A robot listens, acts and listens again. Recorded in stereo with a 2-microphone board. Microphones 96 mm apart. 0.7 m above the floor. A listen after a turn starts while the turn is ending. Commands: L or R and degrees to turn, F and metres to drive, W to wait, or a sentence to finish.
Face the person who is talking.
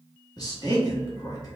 L40
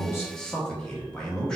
L10
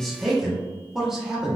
Found it: a man speaking, straight ahead, 1 to 2 m away.